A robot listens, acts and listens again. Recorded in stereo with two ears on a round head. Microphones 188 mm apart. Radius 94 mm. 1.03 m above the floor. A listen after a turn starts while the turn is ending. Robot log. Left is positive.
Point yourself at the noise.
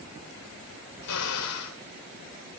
cmd yaw +90
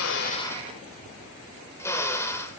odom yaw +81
note: So it is at 10° left.
cmd yaw +10
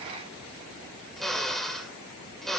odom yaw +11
end: Facing the drill, 2 to 4 m away.